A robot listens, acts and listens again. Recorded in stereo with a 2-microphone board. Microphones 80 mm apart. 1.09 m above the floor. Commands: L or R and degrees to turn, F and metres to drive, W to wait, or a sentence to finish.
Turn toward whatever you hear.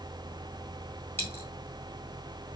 L25
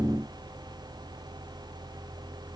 W
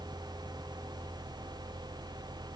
I heard a dropped coin, but can't make it out now. It was about straight ahead or 130° left.